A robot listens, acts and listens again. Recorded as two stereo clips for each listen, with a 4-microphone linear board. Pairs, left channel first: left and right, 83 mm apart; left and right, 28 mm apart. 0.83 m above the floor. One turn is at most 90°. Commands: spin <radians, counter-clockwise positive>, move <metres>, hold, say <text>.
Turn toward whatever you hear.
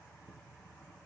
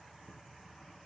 hold
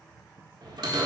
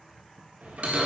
spin -1.05
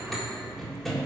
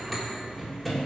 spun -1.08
say Found it: a bell, straight ahead.